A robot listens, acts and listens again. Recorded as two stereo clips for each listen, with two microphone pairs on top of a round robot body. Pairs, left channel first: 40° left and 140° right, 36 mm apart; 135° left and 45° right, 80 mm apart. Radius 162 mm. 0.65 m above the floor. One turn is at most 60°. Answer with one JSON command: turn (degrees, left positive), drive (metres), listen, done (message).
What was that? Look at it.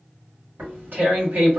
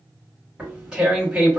{"turn": -60}
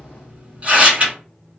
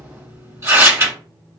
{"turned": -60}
{"turn": -60}
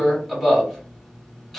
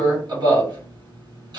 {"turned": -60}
{"turn": -50}
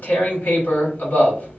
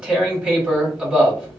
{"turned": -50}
{"turn": 25}
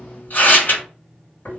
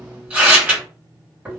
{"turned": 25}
{"turn": 25}
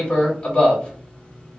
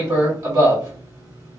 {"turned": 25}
{"turn": -15}
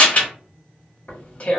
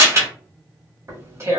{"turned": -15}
{"done": "Found it: tearing paper, straight ahead, 1 to 2 m away."}